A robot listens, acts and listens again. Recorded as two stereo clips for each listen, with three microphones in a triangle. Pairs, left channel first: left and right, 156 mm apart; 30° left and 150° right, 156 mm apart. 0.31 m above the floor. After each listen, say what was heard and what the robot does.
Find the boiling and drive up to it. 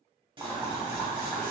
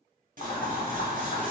The boiling: 10° right. Turn 10° right.
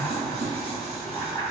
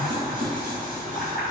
Drive 1.0 m forward.
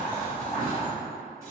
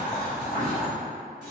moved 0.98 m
Drive 1.0 m forward.
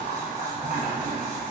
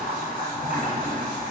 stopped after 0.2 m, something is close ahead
I am next to the boiling.